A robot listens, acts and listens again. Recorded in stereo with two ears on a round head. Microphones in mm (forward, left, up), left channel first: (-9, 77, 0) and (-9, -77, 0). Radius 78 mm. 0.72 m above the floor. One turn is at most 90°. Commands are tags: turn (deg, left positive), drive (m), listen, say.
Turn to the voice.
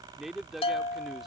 <turn deg="30"/>
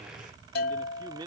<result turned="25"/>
<turn deg="-25"/>
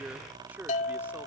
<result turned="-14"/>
<turn deg="-10"/>
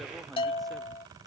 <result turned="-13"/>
<listen/>
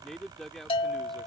<say>Found it: a man speaking, straight ahead.</say>